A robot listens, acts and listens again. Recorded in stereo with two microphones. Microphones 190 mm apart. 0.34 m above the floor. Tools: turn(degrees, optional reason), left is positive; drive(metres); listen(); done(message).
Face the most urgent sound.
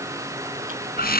listen()
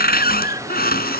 listen()
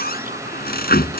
done("I can't make out anything urgent to turn to.")